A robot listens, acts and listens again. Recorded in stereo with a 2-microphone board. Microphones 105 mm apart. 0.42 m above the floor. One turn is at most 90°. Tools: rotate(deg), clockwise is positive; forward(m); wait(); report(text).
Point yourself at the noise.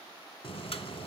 rotate(-65)
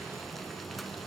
report("Found it: boiling, straight ahead, under 1 m away.")